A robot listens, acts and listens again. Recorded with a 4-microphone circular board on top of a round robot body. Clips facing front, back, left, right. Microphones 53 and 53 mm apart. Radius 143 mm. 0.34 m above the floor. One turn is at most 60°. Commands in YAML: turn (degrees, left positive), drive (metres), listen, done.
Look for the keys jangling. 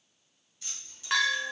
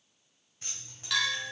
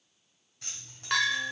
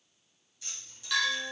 turn: 60
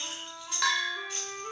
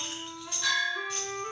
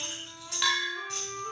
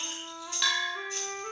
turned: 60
turn: 60
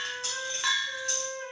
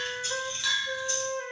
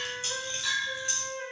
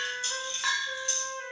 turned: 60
turn: 30
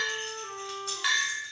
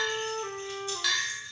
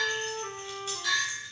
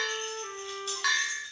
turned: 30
listen: true
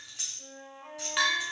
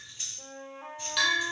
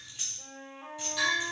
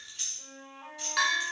turn: 15
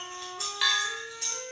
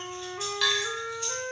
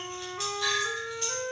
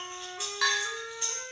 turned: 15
done: "Facing the keys jangling."